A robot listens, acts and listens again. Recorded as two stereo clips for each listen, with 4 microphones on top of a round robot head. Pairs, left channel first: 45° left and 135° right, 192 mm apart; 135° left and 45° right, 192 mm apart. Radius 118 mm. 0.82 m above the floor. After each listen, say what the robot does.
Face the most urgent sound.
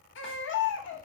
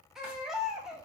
Turn 40° left.
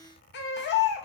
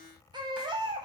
Turn 20° left.
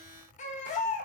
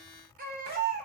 Facing the baby crying, under 1 m away.